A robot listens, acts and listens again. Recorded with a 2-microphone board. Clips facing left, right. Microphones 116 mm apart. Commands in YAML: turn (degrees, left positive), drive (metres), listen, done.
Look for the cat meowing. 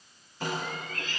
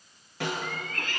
turn: -60
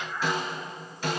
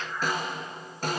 done: "Found it: a cat meowing, straight ahead, 2 to 4 m away."